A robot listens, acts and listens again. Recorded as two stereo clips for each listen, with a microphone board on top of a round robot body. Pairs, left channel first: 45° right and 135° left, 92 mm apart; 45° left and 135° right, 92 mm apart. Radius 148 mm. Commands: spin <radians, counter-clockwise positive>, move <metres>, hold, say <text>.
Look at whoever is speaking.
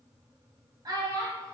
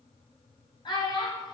spin 1.48
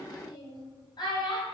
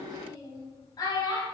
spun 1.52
say Found it: a child speaking, straight ahead, 2 to 4 m away.